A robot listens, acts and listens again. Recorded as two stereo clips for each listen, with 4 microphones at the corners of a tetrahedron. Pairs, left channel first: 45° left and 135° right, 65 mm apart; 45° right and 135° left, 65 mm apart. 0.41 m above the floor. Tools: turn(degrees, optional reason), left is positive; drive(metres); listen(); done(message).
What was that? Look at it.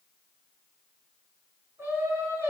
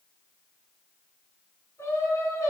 turn(degrees=-80, reason="The singing: 80° right.")
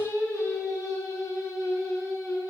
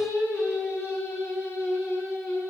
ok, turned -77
turn(degrees=10, reason="The singing is now 10° left.")
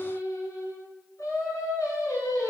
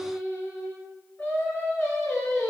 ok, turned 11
turn(degrees=10, reason="The singing is now 10° left.")
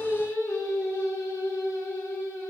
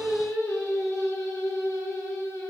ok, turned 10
done("Found it: singing, straight ahead.")